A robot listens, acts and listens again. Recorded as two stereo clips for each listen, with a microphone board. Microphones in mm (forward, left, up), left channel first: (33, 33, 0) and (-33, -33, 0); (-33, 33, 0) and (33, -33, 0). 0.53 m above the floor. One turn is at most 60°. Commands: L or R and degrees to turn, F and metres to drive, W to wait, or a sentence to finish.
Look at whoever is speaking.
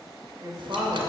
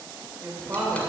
R60
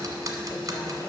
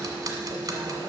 R40
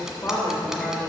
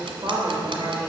Facing the woman speaking.